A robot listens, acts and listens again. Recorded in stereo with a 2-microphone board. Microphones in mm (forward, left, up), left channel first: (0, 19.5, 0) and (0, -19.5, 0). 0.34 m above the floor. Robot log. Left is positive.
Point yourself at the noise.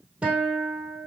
note: The guitar: about 30° right or 150° right.
cmd yaw -30
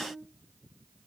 cmd idle
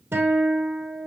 note: So it is at 115° right.
cmd yaw -115
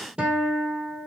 note: The guitar is now 25° right.
cmd yaw -25
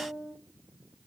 end: Facing the guitar.